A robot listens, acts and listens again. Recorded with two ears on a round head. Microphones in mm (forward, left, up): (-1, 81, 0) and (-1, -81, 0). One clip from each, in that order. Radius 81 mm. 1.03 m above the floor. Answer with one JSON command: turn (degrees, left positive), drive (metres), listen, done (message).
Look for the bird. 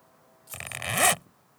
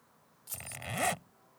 {"listen": true}
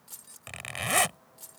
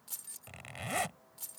{"listen": true}
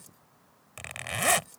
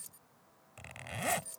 {"done": "I can't make out a bird to turn to."}